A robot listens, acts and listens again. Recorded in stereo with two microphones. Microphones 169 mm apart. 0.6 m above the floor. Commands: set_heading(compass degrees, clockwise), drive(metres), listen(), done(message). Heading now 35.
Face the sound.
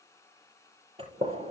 set_heading(70)
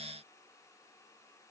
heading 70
listen()
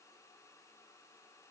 done("I heard a gunshot, but can't make it out now. It was about straight ahead or 110° right.")